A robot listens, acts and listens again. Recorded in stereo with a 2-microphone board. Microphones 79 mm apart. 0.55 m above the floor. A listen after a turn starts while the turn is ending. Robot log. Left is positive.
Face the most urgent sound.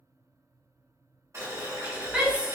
cmd yaw -30
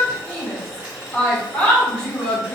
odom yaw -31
note: So it is at 15° left.
cmd yaw +15
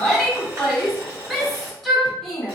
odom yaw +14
end: Facing the shout.